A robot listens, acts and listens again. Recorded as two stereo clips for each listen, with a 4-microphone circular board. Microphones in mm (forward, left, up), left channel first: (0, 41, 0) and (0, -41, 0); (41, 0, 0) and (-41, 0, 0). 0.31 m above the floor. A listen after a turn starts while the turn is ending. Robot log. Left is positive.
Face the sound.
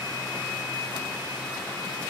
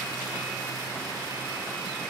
cmd idle
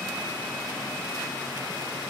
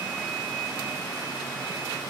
cmd idle
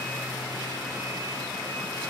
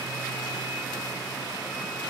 end: I can't make out anything to turn to.